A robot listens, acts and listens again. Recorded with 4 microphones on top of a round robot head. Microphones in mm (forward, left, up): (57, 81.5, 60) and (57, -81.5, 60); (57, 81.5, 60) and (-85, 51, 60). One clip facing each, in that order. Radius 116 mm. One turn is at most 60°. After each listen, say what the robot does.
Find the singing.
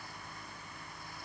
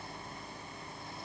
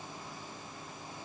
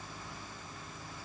Keep listening.
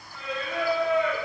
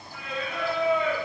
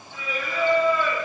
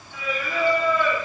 Turn 60° right.
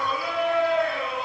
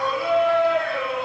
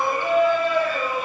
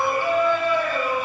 Turn 55° right.
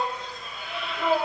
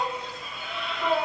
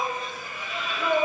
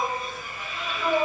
Facing the singing.